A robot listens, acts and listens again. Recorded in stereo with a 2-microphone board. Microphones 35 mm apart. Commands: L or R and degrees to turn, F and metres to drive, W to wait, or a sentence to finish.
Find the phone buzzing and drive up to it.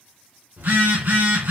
R70
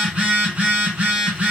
R35
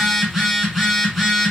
F1.0
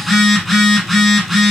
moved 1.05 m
F1.0
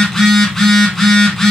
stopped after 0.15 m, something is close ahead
L15
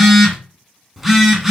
Arrived at the phone buzzing, straight ahead.